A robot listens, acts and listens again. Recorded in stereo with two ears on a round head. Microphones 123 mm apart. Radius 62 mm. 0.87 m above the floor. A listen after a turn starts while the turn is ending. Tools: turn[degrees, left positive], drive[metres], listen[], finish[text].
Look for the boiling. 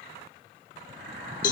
Action: turn[-90]
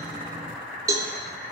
Thought: So it is at 10° right.
Action: turn[-10]
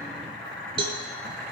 Action: finish[Facing the boiling.]